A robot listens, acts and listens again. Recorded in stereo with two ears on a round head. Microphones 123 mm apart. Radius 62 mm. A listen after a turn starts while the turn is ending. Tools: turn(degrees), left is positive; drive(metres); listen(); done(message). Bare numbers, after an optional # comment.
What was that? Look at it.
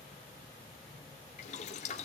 # The boiling: about 50° left or 130° left.
turn(50)
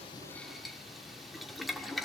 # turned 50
done("Found it: boiling, straight ahead, 1 to 2 m away.")